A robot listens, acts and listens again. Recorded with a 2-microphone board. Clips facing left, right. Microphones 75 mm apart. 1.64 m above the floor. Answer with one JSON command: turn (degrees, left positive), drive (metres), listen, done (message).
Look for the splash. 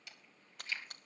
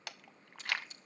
{"turn": 60}
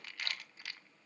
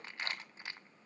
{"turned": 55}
{"listen": true}
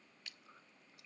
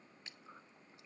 {"done": "I heard a splash, but can't make it out now. It was about 5° left or 65° left."}